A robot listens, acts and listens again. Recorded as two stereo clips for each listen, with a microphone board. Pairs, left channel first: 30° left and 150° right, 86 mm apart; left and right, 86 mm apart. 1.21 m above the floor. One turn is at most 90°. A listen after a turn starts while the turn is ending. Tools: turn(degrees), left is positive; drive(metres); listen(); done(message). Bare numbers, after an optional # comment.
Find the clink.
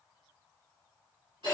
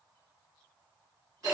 listen()
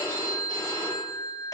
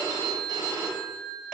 listen()
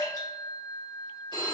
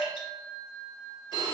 done("I can't make out a clink to turn to.")